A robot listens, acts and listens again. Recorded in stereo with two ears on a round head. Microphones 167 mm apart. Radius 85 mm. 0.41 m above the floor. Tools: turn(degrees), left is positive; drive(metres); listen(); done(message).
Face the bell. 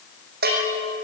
turn(degrees=-60)
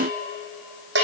turn(degrees=-65)
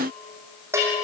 turn(degrees=-15)
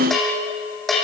done("Found it: a bell, straight ahead.")